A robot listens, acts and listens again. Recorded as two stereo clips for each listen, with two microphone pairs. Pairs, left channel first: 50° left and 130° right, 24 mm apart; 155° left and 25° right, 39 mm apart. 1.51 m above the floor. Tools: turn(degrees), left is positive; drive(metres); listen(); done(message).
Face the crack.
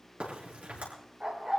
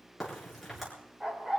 turn(degrees=-120)
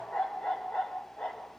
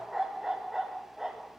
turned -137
turn(degrees=20)
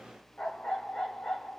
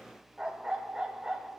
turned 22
done("Facing where the crack came from. I can't hear it now.")